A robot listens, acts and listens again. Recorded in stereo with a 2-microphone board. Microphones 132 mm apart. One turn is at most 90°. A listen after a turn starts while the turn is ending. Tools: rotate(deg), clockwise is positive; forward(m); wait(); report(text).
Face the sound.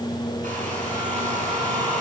rotate(90)
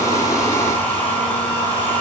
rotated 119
rotate(-15)
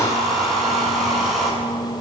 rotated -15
report("Found it: a hair dryer, straight ahead.")